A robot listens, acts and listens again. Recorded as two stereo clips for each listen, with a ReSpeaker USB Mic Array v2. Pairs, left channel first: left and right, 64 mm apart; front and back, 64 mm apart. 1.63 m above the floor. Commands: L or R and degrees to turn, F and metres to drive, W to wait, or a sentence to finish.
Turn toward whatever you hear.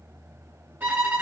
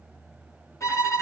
R30
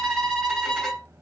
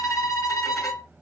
Found it: a violin, straight ahead.